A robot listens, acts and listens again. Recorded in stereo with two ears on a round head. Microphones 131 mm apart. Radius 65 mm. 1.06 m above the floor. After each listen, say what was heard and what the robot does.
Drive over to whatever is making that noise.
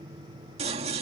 The scissors: about 45° right or 135° right. Turn 45° right.
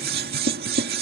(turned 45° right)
So it is at 90° right. Turn 90° right.
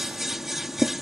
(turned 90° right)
Drive 1.0 m forward.
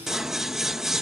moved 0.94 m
Drive 1.0 m forward.
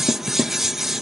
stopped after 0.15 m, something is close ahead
I am next to the scissors.